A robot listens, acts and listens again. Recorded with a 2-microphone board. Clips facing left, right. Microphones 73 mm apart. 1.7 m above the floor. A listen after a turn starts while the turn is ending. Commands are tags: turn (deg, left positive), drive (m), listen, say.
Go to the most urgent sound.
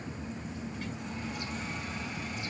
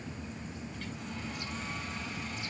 <listen/>
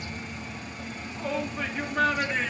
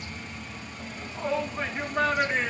<turn deg="-30"/>
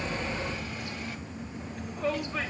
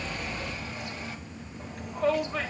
<turn deg="-115"/>
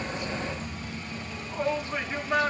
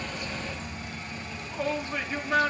<turn deg="25"/>
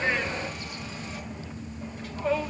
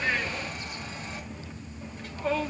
<drive m="1.0"/>
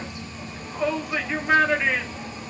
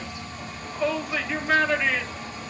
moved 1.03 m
<turn deg="10"/>
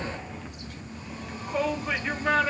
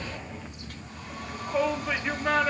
<drive m="1.0"/>
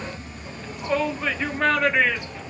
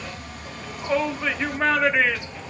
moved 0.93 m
<drive m="1.0"/>
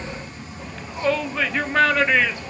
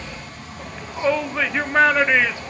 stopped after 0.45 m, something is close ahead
<turn deg="-10"/>
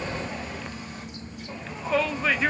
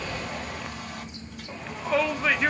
<say>I am next to the shout.</say>